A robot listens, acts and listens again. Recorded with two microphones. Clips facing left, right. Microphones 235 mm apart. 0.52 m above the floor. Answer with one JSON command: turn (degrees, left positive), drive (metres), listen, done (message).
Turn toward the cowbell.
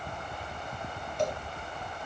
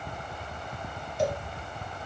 {"turn": -30}
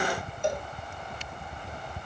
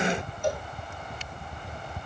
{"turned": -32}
{"turn": 25}
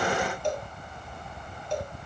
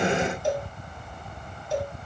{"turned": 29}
{"done": "Found it: a cowbell, straight ahead."}